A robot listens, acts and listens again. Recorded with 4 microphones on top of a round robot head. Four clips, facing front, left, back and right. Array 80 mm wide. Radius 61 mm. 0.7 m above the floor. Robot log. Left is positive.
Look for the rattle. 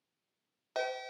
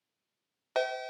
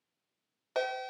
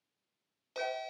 cmd idle
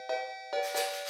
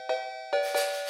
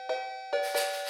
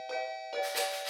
note: The rattle: 65° right.
cmd yaw -65
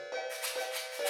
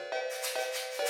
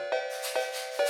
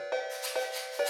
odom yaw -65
note: The rattle is now 35° left.
cmd yaw +35
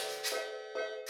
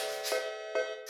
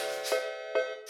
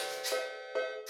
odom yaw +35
end: Found it: a rattle, straight ahead.